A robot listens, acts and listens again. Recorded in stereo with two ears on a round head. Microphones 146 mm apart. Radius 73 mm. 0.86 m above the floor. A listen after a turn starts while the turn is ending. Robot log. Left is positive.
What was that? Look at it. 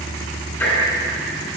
cmd yaw +30
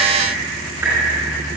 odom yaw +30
cmd idle
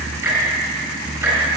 note: So it is at 15° right.
cmd yaw -15
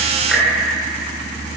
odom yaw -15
cmd idle
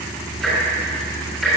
end: Found it: ticking, straight ahead, over 4 m away.